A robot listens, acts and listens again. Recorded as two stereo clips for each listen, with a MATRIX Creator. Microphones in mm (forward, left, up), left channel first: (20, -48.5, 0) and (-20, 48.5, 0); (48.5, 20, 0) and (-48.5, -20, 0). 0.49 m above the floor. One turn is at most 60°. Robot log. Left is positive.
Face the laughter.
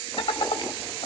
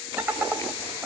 note: The laughter: 80° right.
cmd yaw -60
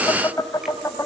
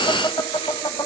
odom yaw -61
note: The laughter is now 10° right.
cmd yaw -10
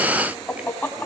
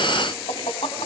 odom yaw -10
end: Facing the laughter.